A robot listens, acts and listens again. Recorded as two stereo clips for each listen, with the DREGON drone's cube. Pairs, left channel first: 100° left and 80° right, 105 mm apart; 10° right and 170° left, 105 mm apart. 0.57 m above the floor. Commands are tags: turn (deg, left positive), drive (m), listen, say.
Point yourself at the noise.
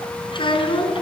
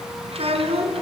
<turn deg="140"/>
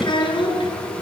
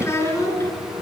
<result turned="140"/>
<turn deg="55"/>
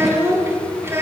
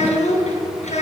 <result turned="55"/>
<turn deg="-10"/>
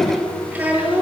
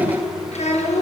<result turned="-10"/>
<say>Found it: a child speaking, straight ahead, over 4 m away.</say>